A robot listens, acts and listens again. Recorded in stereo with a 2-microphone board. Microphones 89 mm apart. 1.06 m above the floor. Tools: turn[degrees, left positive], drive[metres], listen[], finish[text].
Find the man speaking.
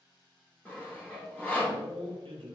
Action: turn[-90]
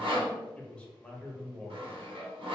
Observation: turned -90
Thought: So it is at 10° left.
Action: turn[10]
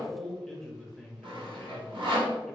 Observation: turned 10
Action: finish[Found it: a man speaking, straight ahead, under 1 m away.]